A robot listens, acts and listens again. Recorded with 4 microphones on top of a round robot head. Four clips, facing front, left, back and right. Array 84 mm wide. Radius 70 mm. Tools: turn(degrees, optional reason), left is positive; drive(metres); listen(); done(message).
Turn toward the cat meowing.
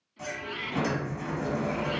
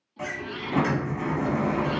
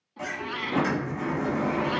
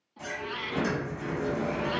turn(degrees=-170, reason="The cat meowing: 170° right.")
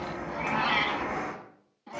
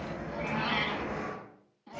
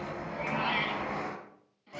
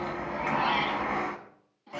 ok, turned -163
done("Facing the cat meowing.")